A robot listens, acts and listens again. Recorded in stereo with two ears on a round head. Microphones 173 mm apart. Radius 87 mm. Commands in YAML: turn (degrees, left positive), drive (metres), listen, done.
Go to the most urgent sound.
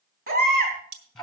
turn: -45
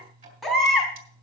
drive: 1.0
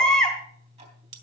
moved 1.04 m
drive: 1.0
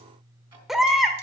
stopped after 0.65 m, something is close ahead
done: "Arrived at the baby crying, straight ahead."